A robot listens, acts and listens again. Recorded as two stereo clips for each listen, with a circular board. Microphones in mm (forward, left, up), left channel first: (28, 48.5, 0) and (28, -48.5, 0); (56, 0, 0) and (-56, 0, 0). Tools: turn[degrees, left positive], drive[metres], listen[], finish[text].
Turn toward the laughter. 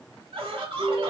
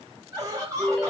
Thought: The laughter: 120° right.
Action: turn[-120]
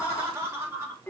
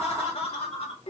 Thought: The laughter is now 25° right.
Action: turn[-25]
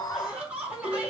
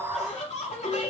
Thought: The laughter is now 10° right.
Action: turn[-10]
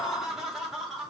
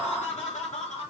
Action: finish[Facing the laughter.]